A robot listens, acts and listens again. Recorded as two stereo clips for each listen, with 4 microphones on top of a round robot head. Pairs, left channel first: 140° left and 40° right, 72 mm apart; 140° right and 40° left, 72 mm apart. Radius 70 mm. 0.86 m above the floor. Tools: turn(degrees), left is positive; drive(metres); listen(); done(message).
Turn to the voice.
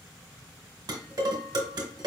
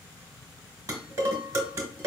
listen()
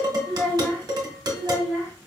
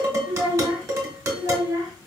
turn(degrees=80)
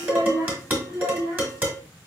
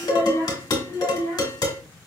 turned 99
done("Facing the child speaking.")